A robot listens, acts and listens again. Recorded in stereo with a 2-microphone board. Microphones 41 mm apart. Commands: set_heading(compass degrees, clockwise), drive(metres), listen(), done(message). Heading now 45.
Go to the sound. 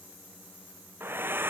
set_heading(105)
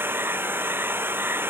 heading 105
set_heading(165)
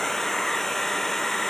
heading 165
drive(1.0)
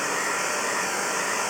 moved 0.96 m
drive(1.0)
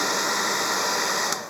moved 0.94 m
drive(1.0)
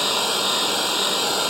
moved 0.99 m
drive(1.0)
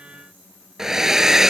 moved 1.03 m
set_heading(175)
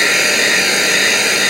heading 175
drive(1.0)
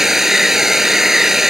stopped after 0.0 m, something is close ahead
set_heading(185)
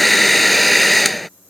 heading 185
done("Arrived at the hair dryer, straight ahead.")